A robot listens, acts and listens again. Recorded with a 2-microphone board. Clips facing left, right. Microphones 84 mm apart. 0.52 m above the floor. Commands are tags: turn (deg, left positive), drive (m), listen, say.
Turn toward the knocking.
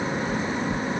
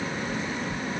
<turn deg="65"/>
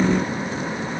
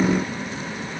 <listen/>
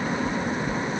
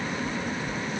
<turn deg="50"/>
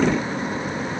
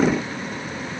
<listen/>
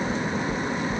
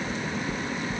<say>Found it: knocking, straight ahead.</say>